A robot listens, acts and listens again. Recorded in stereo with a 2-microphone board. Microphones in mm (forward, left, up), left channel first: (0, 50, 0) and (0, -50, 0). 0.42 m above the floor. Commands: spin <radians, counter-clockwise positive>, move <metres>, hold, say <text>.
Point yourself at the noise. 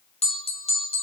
spin 1.57
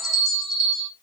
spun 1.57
say Found it: a bell, straight ahead, under 1 m away.